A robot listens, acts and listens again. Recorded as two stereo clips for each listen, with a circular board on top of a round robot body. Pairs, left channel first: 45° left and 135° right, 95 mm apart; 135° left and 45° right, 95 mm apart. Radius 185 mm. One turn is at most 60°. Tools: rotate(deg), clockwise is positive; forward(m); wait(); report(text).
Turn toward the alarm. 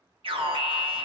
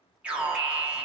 rotate(60)
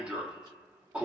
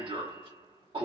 rotate(60)
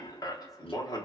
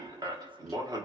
report("Found it: an alarm, straight ahead.")